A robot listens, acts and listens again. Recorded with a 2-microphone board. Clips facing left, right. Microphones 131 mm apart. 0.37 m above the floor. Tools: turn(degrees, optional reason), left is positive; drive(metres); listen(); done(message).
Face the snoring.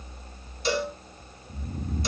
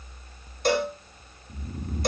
turn(degrees=-20, reason="The snoring: about 20° right or 160° right.")
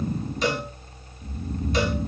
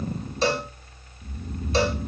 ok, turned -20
done("Facing the snoring, under 1 m away.")